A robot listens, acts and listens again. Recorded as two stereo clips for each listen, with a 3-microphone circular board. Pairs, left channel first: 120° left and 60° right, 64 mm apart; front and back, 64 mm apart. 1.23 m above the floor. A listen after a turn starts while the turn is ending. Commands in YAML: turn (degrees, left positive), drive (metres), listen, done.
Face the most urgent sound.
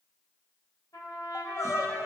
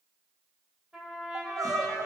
turn: 160
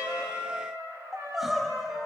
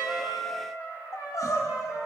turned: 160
turn: 30
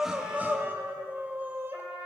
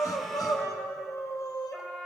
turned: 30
done: "Facing the crying."